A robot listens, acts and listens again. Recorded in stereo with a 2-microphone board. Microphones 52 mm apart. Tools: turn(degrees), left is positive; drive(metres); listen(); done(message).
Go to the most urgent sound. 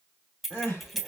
turn(degrees=60)
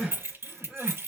drive(metres=1.0)
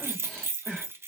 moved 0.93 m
turn(degrees=10)
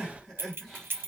drive(metres=1.0)
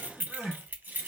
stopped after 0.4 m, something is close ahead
done("Arrived at the crying, straight ahead.")